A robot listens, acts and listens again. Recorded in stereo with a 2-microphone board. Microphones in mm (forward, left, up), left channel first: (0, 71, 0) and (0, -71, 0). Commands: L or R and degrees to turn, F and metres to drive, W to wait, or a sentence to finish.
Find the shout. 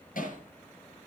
W
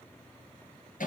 W
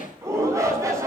R20
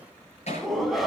Facing the shout.